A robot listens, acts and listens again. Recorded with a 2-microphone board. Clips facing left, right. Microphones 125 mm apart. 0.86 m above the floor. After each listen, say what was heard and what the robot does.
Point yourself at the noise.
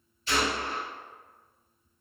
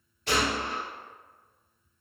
The gunshot: about 65° right or 115° right. Turn 65° right.
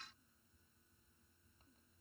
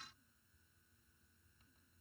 Keep listening.
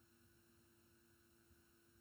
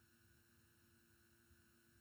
I heard a gunshot, but can't make it out now. It was about straight ahead or 50° right.